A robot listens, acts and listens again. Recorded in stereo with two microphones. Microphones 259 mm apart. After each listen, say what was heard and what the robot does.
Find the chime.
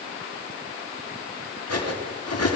Keep listening.
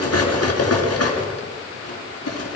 Keep listening.
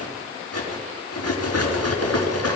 I can't make out a chime, only cutlery clinking.